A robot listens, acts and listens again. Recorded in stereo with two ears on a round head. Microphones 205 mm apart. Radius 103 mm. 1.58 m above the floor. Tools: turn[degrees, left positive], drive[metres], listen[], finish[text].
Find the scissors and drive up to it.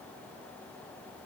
Action: listen[]
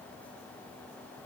Action: listen[]
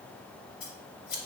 Thought: The scissors: about 65° left or 115° left.
Action: turn[65]
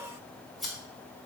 Action: drive[1.0]
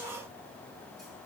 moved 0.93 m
Action: listen[]
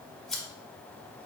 Action: drive[1.0]
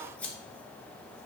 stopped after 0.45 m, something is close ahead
Action: finish[I am next to the scissors.]